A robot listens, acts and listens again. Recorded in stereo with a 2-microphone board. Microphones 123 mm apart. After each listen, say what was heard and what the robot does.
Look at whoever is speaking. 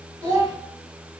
The child speaking: about 30° right or 150° right. Turn 30° right.
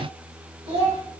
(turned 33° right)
So it is at 115° right. Turn 115° right.
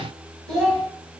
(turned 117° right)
Found it: a child speaking, straight ahead, 1 to 2 m away.